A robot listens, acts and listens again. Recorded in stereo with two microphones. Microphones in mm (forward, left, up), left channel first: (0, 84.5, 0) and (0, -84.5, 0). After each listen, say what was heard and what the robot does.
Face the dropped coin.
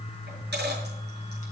Turn 90° right.
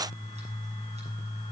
I heard a dropped coin from this way, but can't make it out now.